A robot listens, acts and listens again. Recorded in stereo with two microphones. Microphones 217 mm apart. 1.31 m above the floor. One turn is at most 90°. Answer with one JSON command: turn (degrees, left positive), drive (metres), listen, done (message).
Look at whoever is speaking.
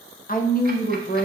{"turn": 40}
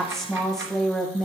{"done": "Found it: a woman speaking, straight ahead, under 1 m away."}